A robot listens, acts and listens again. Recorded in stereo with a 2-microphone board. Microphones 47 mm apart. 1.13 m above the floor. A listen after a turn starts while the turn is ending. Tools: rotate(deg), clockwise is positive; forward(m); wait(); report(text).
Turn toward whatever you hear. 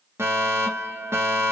rotate(60)
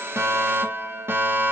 rotate(60)
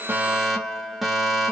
report("Found it: a fire alarm, straight ahead.")